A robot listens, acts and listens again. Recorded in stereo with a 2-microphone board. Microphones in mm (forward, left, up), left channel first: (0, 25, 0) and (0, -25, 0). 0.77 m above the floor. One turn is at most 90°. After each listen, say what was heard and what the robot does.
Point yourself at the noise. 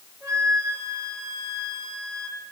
Turn 90° right.
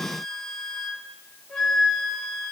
Found it: a flute, straight ahead.